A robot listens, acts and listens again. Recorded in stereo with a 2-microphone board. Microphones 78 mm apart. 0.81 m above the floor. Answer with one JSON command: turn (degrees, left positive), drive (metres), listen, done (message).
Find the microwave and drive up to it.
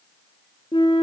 {"listen": true}
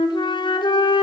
{"listen": true}
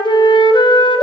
{"done": "I can't make out a microwave, only a flute."}